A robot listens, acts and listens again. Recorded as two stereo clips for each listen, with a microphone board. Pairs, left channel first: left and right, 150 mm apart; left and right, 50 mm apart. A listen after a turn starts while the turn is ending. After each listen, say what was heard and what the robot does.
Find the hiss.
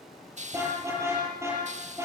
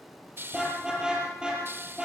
The hiss: about 50° right or 130° right. Turn 50° right.
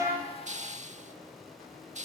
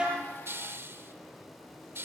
So it is at 65° right. Turn 65° right.
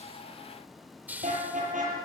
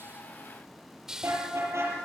The hiss is now 15° right. Turn 15° right.
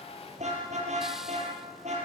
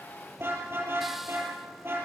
Keep listening.
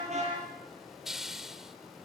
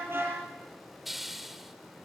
Found it: a hiss, straight ahead.